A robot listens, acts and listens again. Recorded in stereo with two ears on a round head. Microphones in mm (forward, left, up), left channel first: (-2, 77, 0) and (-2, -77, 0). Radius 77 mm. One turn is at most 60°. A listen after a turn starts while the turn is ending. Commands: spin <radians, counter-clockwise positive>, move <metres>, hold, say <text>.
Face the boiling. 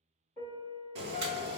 spin -1.05
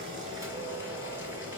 spin -0.26
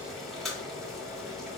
say Found it: boiling, straight ahead, 1 to 2 m away.